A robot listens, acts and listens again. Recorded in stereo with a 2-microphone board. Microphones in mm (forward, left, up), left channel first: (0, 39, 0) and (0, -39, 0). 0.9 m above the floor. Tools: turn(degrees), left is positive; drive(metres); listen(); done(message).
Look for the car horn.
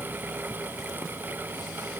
listen()
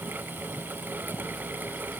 listen()
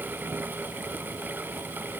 done("I can't make out a car horn to turn to.")